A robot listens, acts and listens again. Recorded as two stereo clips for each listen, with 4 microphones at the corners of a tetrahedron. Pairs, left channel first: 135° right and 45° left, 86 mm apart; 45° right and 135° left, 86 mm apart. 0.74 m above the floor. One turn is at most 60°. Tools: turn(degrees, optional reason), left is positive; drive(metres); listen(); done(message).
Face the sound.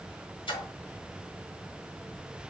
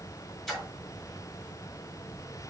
turn(degrees=-60, reason="The splash: 130° right.")
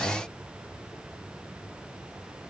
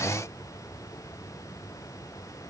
turn(degrees=-60, reason="Nothing new. It was at 70° right.")
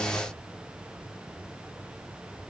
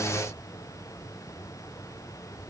turn(degrees=-10, reason="Nothing new. It was at 10° right.")
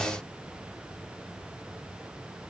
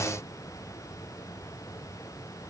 done("I heard a splash from this way, but can't make it out now.")